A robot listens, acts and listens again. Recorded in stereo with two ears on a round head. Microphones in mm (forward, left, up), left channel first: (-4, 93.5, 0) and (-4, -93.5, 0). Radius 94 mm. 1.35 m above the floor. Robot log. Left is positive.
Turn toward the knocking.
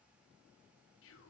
cmd idle
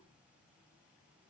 cmd idle
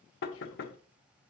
note: The knocking: about 55° left or 125° left.
cmd yaw +55
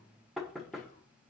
end: Facing the knocking, under 1 m away.